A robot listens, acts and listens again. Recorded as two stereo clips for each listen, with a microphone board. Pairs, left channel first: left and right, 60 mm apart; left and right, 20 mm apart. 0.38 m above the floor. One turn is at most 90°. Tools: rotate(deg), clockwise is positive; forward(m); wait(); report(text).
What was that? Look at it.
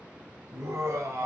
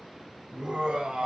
rotate(55)
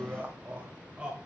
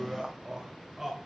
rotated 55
rotate(15)
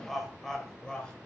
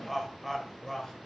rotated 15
rotate(-15)
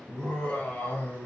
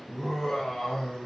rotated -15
rotate(-30)
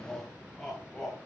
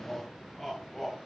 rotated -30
rotate(-10)
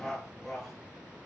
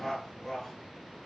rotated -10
report("Facing the laughter, 2 to 4 m away.")